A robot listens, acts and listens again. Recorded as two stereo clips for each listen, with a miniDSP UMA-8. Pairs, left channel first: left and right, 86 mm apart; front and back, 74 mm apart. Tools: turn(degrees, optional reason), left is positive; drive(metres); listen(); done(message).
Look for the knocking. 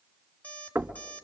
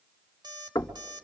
turn(degrees=-20, reason="The knocking: 20° right.")
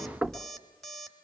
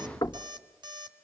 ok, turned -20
done("Facing the knocking.")